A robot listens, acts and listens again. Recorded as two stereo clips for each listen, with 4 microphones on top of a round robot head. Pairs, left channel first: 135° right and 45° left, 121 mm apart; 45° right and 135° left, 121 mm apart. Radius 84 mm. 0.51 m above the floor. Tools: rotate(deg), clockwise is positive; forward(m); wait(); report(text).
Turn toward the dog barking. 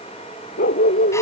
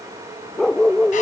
rotate(130)
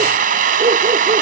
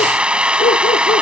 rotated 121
wait()
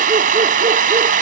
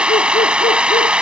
wait()
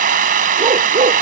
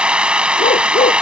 report("Facing where the dog barking came from. I can't hear it now.")